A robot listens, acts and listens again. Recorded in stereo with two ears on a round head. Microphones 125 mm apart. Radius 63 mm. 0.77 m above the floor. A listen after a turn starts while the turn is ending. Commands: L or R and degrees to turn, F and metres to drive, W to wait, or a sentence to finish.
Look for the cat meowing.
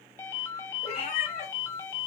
L50
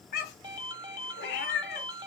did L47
L85
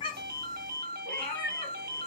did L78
L10
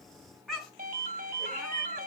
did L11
Facing the cat meowing.